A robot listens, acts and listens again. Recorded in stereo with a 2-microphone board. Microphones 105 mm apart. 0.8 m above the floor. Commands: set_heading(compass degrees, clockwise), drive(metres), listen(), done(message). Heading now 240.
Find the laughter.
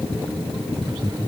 set_heading(270)
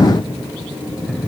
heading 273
done("Found it: laughter, straight ahead.")